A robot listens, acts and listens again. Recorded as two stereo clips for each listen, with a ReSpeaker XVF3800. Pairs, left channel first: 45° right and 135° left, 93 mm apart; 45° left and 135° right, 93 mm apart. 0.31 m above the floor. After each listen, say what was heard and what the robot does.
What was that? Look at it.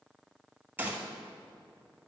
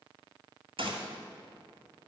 The gunshot: 155° right. Turn 155° right.
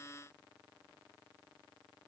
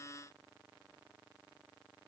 I heard a gunshot from this way, but can't make it out now.